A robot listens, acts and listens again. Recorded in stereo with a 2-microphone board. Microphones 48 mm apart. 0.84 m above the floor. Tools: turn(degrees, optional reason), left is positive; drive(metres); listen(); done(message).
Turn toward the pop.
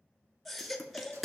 turn(degrees=30)
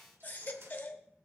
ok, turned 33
listen()
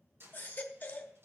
done("I heard a pop, but can't make it out now. It was about 35° right or 150° left.")